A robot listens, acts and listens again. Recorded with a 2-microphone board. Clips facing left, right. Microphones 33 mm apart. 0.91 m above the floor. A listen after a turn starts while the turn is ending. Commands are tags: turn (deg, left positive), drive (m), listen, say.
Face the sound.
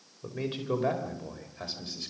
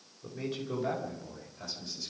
<turn deg="50"/>
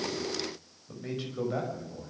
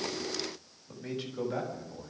<turn deg="10"/>
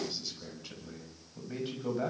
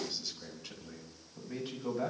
<turn deg="10"/>
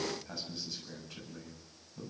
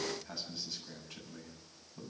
<say>Facing the man speaking.</say>